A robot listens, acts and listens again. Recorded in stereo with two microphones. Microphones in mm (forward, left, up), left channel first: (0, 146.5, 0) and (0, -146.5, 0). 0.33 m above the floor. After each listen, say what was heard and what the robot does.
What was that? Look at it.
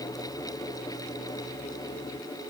Keep listening.
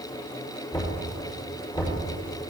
The knocking: about 20° left or 160° left. Turn 20° left.
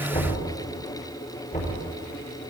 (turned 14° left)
So it is at 150° left. Turn 150° left.
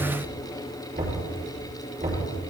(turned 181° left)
The knocking is now 35° right. Turn 35° right.
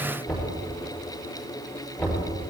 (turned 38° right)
Found it: knocking, straight ahead, over 4 m away.